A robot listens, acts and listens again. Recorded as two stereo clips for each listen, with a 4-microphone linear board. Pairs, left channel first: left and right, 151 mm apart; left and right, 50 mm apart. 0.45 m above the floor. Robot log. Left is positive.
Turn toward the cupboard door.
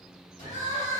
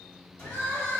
note: The cupboard door: about 55° left or 125° left.
cmd yaw +55
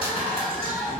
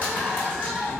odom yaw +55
cmd idle
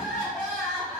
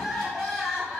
cmd idle
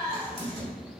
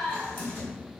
note: So it is at 45° left.
cmd yaw +45
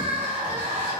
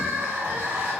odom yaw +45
cmd idle
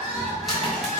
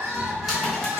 end: Found it: a cupboard door, straight ahead, 1 to 2 m away.